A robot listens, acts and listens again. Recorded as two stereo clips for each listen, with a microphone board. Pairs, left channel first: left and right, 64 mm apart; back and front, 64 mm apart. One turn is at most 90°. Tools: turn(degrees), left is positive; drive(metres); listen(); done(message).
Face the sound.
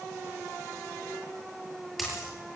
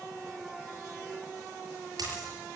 done("Found it: a dropped coin, straight ahead, over 4 m away.")